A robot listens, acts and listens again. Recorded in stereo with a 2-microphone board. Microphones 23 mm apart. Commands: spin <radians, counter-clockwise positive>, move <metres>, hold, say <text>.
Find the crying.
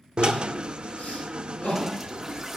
spin 1.57
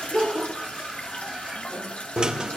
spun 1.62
say Facing the crying.